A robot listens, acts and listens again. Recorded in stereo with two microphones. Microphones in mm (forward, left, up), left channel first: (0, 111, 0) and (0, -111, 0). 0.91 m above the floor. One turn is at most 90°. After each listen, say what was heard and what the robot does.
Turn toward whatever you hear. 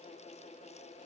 Keep listening.
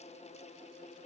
Keep listening.
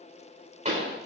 The pop: about 35° right or 145° right. Turn 35° right.
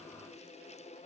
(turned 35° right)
Keep listening.
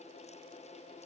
I heard a pop, but can't make it out now. It was about straight ahead or 110° right.